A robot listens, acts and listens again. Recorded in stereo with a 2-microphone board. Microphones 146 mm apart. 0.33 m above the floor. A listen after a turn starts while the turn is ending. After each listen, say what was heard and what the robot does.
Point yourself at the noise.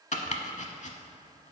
The chopping: about 55° left or 125° left. Turn 55° left.
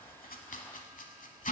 So it is at 65° left. Turn 65° left.
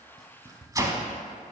The chopping is now 25° right. Turn 25° right.
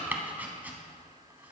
The chopping is now 10° right. Turn 10° right.
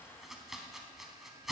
Facing the chopping, under 1 m away.